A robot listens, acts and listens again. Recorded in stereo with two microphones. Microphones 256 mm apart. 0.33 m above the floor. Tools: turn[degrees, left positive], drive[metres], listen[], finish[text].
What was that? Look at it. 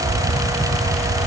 Action: listen[]
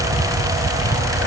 Action: listen[]
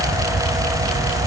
Action: finish[I can't make out anything to turn to.]